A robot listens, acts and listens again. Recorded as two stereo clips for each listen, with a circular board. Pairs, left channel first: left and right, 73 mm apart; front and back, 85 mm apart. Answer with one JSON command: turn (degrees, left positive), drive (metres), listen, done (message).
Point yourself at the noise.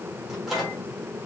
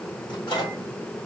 {"done": "Facing the microwave, 2 to 4 m away."}